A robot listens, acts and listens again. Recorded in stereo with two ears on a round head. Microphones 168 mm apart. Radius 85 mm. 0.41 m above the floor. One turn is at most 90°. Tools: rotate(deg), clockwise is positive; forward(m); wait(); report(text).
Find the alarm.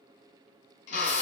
wait()
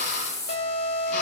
rotate(-55)
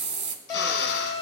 rotate(-20)
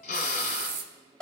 report("Facing the alarm.")